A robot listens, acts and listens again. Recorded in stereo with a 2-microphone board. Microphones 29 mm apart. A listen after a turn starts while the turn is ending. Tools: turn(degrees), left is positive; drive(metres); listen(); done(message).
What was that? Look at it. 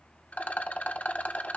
turn(degrees=60)
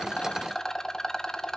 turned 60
turn(degrees=25)
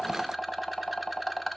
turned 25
done("Facing the rattle.")